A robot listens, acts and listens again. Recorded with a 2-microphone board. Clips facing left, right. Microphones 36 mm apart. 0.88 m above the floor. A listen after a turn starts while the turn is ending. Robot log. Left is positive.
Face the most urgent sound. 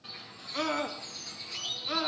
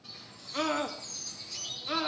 cmd yaw +30
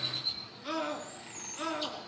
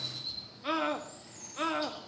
note: So it is at 30° right.
cmd yaw -30
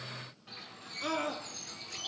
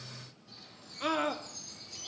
note: The scream is now 25° right.
cmd yaw -25
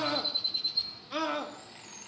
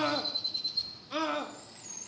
end: Found it: a scream, straight ahead, 1 to 2 m away.